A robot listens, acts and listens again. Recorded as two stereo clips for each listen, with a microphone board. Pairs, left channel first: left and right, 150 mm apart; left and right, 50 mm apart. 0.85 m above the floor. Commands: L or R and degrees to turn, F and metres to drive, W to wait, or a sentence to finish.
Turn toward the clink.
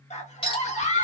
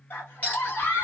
L40
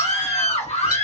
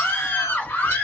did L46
W
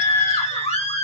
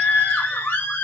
W
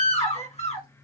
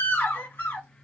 I heard a clink, but can't make it out now. It was about 10° right or 95° left.